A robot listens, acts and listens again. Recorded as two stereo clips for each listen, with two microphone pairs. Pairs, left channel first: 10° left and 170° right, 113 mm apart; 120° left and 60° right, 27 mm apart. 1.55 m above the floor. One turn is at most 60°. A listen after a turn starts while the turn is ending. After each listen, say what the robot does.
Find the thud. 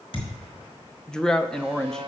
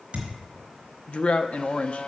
Turn 25° right.
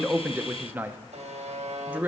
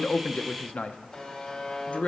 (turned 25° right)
I heard a thud from this way, but can't make it out now.